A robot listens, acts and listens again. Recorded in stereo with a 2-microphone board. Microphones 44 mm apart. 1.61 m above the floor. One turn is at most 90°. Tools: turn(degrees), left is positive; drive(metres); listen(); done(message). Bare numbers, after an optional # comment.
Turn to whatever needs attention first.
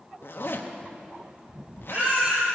# The baby crying: about 35° right or 145° right.
turn(-35)
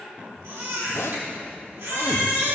# So it is at 105° right.
turn(-90)
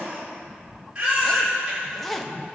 # The baby crying is now 25° right.
turn(-25)
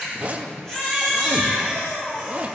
# The baby crying is now 10° left.
turn(10)
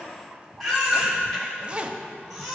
done("Found it: a baby crying, straight ahead, over 4 m away.")